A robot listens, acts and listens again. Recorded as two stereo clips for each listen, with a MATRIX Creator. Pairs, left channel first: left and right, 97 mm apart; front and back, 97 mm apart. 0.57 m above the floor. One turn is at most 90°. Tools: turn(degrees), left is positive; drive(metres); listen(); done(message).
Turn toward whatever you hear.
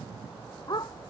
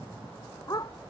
turn(degrees=45)
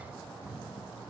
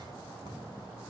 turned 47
listen()
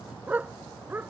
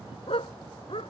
turn(degrees=-20)
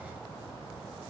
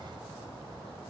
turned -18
listen()
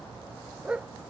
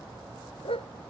turn(degrees=-10)
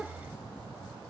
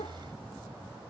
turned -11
listen()
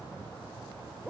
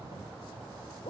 listen()
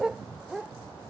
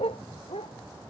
done("Found it: a dog barking, straight ahead.")